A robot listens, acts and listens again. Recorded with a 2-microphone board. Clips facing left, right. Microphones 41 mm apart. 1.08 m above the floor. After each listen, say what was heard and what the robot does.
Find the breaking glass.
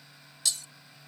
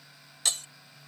The breaking glass: about 50° right or 130° right. Turn 50° right.
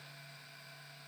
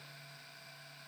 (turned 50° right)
Keep listening.
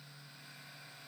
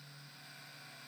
I heard breaking glass, but can't make it out now. It was about straight ahead or 80° right.